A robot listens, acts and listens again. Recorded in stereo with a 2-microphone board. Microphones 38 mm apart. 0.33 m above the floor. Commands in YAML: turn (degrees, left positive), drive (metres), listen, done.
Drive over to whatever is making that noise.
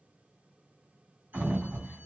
turn: -60
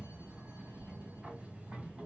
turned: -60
turn: -40
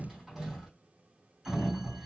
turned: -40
turn: -10
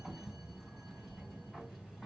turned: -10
drive: 1.0
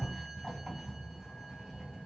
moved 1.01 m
drive: 1.0
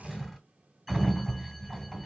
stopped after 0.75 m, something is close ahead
done: "Arrived at the sliding door, straight ahead."